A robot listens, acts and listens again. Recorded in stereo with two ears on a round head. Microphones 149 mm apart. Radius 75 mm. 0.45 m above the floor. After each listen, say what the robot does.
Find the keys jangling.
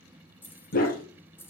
Turn 30° left.
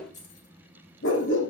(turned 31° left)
Turn 135° left.
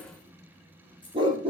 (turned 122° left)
Turn 10° left.
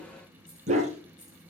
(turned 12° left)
Keep listening.
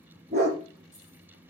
Keep listening.
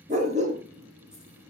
I heard keys jangling from this way, but can't make it out now.